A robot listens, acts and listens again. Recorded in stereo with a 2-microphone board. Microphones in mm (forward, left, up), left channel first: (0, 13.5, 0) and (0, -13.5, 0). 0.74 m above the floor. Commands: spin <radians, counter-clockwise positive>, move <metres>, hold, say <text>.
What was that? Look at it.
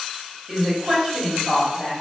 spin -0.52
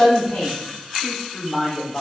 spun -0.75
spin 0.87
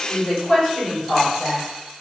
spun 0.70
spin 0.35
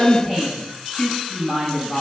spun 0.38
say Facing the woman speaking, 2 to 4 m away.